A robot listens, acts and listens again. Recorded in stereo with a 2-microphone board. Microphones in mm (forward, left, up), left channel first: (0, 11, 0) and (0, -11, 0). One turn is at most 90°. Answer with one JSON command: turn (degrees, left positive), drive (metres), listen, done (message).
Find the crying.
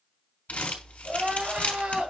{"turn": -90}
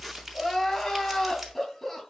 {"turn": 10}
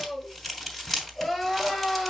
{"done": "Facing the crying, 2 to 4 m away."}